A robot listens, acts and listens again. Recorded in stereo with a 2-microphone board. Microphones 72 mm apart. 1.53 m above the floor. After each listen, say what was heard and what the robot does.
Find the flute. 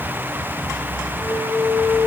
The flute: about 45° left or 135° left. Turn 45° left.
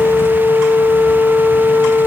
So it is at 95° left. Turn 95° left.
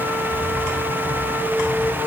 Keep listening.
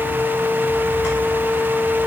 The flute is now 20° left. Turn 20° left.
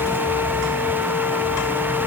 Keep listening.
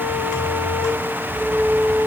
Found it: a flute, straight ahead, 1 to 2 m away.